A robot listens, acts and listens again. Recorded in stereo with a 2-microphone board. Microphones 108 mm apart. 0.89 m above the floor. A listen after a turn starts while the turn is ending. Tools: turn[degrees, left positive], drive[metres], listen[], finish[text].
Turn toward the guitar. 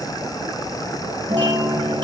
Action: turn[-90]
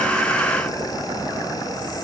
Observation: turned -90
Action: listen[]
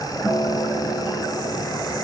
Action: finish[Found it: a guitar, straight ahead.]